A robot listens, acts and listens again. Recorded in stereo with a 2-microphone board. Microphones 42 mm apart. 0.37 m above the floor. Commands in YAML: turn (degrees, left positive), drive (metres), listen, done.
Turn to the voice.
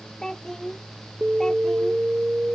turn: 30
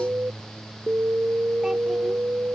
listen: true
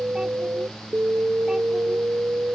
listen: true
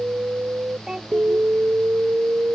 turn: -15
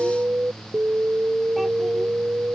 listen: true
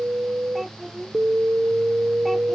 done: "Found it: a child speaking, straight ahead."